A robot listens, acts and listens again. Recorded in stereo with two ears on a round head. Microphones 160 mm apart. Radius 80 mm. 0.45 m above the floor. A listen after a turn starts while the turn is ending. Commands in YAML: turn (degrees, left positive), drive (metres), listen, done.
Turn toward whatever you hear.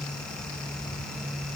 listen: true
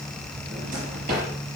turn: -55
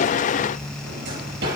turn: -70
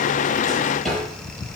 done: "Facing the drawer, over 4 m away."